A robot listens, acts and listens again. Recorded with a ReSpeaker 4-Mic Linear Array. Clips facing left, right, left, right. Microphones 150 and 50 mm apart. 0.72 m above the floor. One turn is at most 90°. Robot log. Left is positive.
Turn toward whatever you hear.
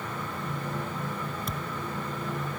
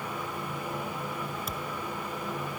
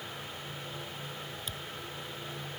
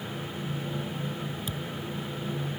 cmd yaw -30
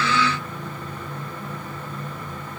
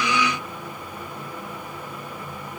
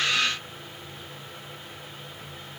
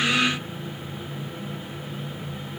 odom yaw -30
cmd idle
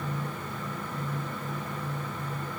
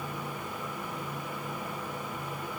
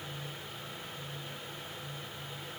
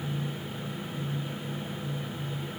end: I heard a thud, but can't make it out now. It was about 25° left or 145° right.